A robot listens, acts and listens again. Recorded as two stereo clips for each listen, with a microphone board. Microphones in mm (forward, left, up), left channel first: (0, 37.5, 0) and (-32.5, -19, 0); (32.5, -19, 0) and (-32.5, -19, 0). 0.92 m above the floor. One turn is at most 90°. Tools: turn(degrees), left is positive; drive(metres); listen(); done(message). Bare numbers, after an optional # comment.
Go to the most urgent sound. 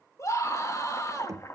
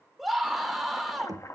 # The scream: 95° left.
turn(90)
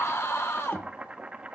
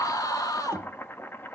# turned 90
# The scream is now 15° left.
turn(15)
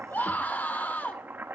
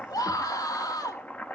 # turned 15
drive(1.0)
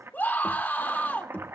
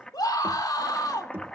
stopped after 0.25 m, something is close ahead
done("Something is in my way. I am facing the scream but have not reached it.")